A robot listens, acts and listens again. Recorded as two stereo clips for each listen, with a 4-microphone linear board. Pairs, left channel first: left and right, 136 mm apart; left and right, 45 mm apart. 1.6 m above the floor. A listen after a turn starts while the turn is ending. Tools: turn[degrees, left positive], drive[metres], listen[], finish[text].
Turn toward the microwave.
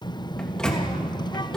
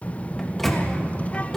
Action: turn[30]
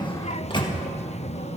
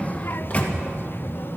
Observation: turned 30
Thought: So it is at 145° left.
Action: turn[145]
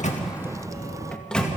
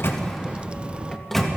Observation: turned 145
Action: finish[Facing the microwave, 2 to 4 m away.]